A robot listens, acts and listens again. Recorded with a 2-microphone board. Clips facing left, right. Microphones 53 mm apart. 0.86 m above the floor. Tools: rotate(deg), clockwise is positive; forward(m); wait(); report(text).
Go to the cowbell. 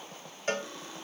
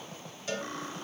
rotate(-45)
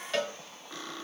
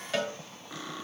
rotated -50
forward(1.0)
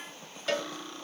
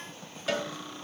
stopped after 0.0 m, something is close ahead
report("Blocked. The cowbell is further on, straight ahead.")